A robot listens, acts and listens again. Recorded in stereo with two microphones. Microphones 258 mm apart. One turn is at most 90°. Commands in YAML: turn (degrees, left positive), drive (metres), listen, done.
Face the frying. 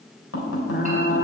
turn: 45
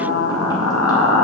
turn: 90
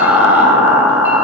done: "Found it: frying, straight ahead, 1 to 2 m away."